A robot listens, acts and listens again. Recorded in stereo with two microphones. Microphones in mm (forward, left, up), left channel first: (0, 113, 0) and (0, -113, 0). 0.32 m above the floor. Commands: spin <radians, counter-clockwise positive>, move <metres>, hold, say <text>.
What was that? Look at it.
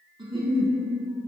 spin -0.44
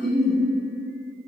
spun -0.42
say Found it: a giggle, straight ahead, 1 to 2 m away.